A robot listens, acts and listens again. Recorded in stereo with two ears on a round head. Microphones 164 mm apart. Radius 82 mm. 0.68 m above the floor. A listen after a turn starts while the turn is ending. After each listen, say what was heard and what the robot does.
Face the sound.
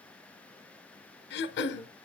The throat clearing: about 65° left or 115° left. Turn 65° left.
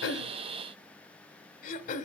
So it is at 45° left. Turn 45° left.
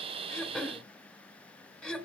Facing the throat clearing.